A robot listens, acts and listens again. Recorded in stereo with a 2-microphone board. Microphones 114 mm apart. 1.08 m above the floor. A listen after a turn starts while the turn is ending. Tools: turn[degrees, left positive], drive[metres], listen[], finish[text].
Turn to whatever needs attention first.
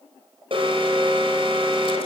Thought: The alarm: about 50° right or 130° right.
Action: turn[-50]
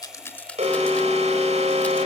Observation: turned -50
Thought: So it is at 75° right.
Action: turn[-75]
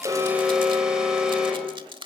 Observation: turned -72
Action: finish[Found it: an alarm, straight ahead, over 4 m away.]